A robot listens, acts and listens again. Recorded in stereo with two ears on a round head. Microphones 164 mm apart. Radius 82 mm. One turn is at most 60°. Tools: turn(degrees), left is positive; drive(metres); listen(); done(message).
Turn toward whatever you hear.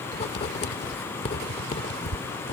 turn(degrees=35)
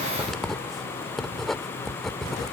done("Found it: writing, straight ahead.")